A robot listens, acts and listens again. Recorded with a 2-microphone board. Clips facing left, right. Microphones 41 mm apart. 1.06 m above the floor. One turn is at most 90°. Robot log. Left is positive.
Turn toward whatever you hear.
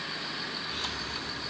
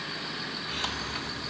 note: The hiss: about 50° right or 130° right.
cmd yaw -50
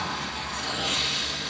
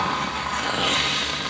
note: So it is at 70° right.
cmd yaw -70
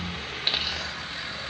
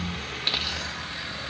end: Found it: a hiss, straight ahead.